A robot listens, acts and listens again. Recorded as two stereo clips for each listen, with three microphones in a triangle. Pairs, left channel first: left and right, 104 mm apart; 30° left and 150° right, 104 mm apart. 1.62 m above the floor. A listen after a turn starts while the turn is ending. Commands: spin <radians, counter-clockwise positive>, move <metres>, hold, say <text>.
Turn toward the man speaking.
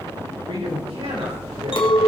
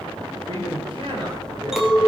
spin -1.92
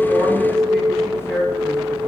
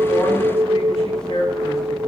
say Found it: a man speaking, straight ahead.